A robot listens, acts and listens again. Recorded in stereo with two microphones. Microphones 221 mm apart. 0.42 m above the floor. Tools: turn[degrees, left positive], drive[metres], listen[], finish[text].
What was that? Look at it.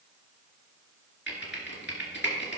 Thought: The typing on a keyboard: about 55° left or 125° left.
Action: turn[55]
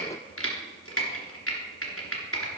Thought: So it is at 70° left.
Action: turn[70]
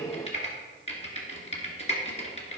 Thought: The typing on a keyboard is now 30° left.
Action: turn[30]
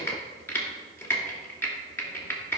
Thought: The typing on a keyboard is now 10° left.
Action: turn[10]
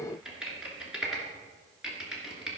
Action: finish[Found it: typing on a keyboard, straight ahead, 2 to 4 m away.]